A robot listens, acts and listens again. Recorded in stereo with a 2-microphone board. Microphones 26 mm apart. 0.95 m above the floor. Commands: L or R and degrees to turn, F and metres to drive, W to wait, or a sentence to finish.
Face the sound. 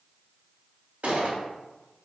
R70
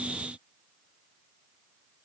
W
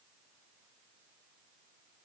I heard a gunshot, but can't make it out now. It was about straight ahead or 40° right.